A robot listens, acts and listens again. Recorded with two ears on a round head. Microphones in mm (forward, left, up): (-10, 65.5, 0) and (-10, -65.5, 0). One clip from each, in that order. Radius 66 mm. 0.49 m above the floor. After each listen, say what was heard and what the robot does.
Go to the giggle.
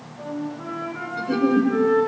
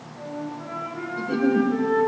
The giggle: about 30° left or 150° left. Turn 30° left.
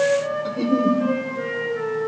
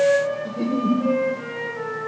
So it is at 115° left. Turn 115° left.
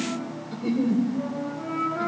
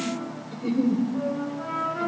Drive 1.0 m forward.
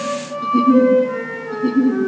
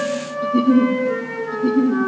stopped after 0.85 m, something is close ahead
I am next to the giggle.